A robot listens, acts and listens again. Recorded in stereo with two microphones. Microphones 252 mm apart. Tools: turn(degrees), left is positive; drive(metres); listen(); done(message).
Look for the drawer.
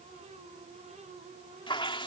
listen()
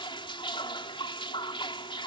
listen()
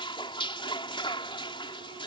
done("I can't make out a drawer, only dripping.")